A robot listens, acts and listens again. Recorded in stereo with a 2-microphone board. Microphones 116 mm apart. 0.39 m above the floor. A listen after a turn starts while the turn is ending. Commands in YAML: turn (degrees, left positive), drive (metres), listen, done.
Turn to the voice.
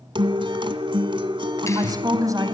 turn: -30
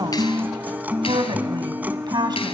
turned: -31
turn: -40
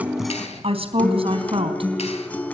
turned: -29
turn: -125
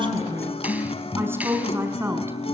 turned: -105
turn: -20
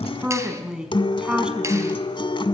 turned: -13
done: "Found it: a woman speaking, straight ahead."